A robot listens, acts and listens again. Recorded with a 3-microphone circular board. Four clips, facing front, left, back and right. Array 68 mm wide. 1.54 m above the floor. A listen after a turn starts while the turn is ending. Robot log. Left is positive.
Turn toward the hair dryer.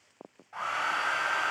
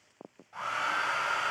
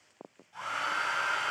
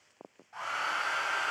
end: Found it: a hair dryer, straight ahead, over 4 m away.